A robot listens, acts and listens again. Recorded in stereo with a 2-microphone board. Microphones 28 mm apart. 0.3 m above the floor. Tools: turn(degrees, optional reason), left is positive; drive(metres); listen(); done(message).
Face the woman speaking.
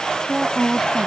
turn(degrees=-30)
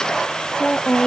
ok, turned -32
turn(degrees=45, reason="So it is at 45° left.")
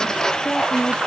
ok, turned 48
turn(degrees=35, reason="The woman speaking is now 35° left.")
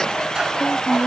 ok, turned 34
turn(degrees=25, reason="The woman speaking is now 25° left.")
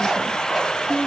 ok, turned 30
done("Facing the woman speaking.")